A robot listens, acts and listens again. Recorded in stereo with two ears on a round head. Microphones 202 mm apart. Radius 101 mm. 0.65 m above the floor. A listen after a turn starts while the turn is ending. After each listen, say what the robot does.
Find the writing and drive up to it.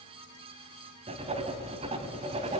Turn 30° right.
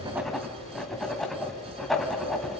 Drive 1.0 m forward.
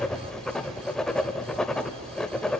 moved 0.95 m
Drive 1.0 m forward.
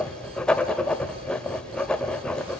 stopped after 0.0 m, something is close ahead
I am next to the writing.